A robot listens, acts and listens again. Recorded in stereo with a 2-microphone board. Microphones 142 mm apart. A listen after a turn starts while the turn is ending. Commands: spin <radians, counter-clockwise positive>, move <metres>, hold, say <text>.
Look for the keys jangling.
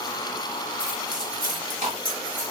spin -1.31
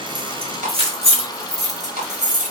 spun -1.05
spin -1.05
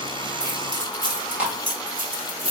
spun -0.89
spin -0.70
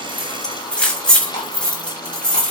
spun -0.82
say Facing the keys jangling.